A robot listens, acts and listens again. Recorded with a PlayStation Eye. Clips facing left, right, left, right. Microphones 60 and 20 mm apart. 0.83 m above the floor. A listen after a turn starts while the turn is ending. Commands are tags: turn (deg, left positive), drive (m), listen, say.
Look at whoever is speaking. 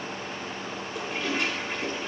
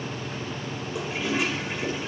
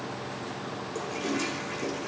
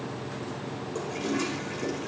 <listen/>
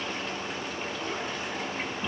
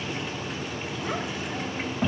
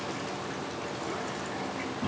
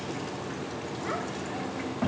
<turn deg="-90"/>
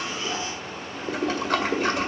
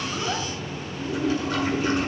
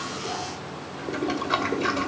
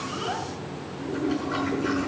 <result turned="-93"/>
<listen/>
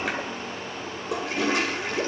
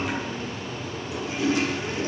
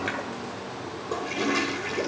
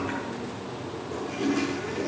<listen/>
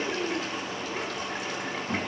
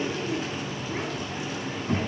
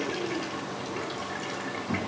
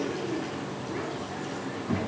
<turn deg="-10"/>
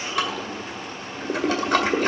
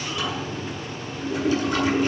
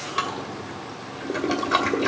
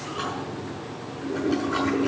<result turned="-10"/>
<listen/>
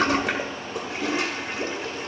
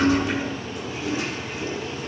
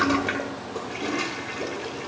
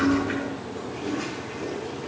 <listen/>
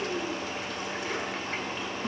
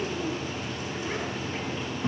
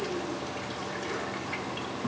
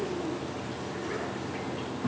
<say>Facing the child speaking.</say>